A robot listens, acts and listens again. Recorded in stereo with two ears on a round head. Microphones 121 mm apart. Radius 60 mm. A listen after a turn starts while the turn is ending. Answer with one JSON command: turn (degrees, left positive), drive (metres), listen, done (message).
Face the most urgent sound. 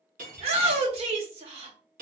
{"turn": -50}
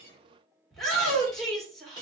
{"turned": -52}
{"done": "Facing the shout, 1 to 2 m away."}